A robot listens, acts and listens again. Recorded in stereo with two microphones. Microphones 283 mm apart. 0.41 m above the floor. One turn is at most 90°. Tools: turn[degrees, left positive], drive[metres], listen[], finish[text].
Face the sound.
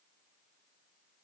Action: listen[]
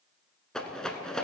Action: turn[30]
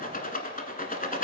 Thought: So it is at 150° left.
Action: turn[90]
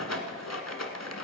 Thought: The rattle is now 65° left.
Action: turn[65]
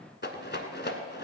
Thought: The rattle is now 40° left.
Action: turn[40]
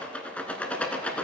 Action: finish[Found it: a rattle, straight ahead, 1 to 2 m away.]